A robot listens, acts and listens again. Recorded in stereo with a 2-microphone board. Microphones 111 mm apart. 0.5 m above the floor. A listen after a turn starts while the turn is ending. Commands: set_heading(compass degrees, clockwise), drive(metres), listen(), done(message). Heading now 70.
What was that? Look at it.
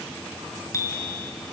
set_heading(45)
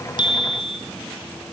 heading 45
set_heading(280)
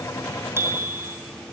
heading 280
set_heading(305)
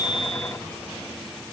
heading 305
listen()
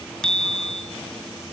done("Facing the bicycle bell.")